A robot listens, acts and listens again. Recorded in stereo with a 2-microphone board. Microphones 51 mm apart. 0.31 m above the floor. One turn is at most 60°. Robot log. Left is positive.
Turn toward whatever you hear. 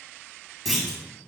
cmd yaw +30
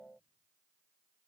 cmd idle
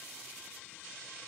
end: I heard a clunk, but can't make it out now. It was about 30° right or 150° left.